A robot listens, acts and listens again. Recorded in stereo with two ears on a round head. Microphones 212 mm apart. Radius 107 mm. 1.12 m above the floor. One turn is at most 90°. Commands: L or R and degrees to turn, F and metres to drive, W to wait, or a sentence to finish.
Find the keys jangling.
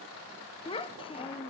W
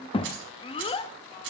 R55
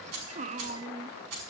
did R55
R75
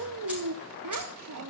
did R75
W
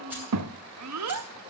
R10
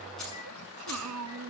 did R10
Facing the keys jangling, over 4 m away.